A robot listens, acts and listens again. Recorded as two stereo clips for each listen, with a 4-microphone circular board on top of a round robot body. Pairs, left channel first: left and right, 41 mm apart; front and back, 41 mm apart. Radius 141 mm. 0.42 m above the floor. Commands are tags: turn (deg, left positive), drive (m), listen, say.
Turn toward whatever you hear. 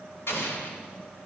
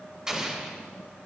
<turn deg="105"/>
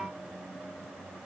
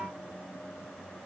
<say>I heard an explosion from this way, but can't make it out now.</say>